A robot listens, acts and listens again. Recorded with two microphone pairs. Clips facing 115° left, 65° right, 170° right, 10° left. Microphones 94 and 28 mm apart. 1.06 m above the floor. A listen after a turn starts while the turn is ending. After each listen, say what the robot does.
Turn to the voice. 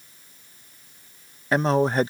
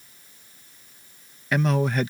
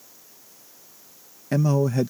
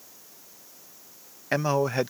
Turn 60° left.
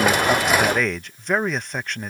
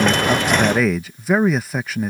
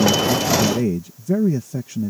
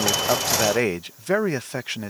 Turn 20° left.
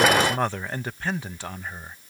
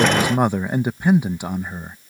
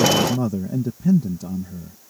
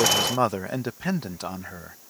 Facing the man speaking.